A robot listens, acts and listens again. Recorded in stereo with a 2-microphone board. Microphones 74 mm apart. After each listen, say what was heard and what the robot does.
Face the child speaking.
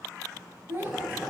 The child speaking: about 30° right or 150° right. Turn 30° right.
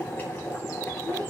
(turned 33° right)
So it is at 130° right. Turn 130° right.
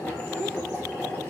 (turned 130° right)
Keep listening.
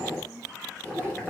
The child speaking is now 25° right. Turn 25° right.
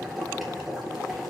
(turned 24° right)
Keep listening.
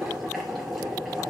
Keep listening.
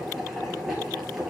Facing where the child speaking came from. I can't hear it now.